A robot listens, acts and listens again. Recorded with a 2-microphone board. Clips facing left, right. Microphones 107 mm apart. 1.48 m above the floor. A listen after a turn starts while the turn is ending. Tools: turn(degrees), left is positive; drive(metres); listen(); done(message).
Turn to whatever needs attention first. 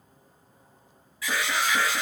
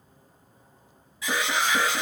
turn(degrees=-20)
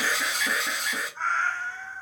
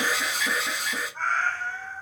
done("Facing the alarm.")